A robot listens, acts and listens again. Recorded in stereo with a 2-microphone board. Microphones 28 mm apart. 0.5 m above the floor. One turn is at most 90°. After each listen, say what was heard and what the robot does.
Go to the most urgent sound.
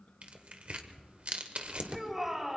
Turn 30° right.
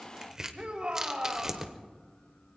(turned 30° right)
So it is at 135° right. Turn 90° right.
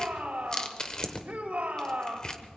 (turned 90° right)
The shout is now 80° right. Turn 80° right.
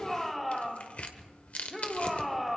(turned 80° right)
Drive 1.0 m forward.
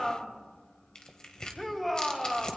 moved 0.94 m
Drive 1.0 m forward.
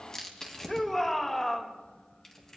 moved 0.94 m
The shout is now 10° left. Turn 10° left.
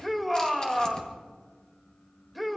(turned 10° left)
Drive 1.0 m forward.
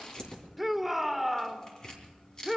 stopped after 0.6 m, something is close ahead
Arrived at the shout, straight ahead.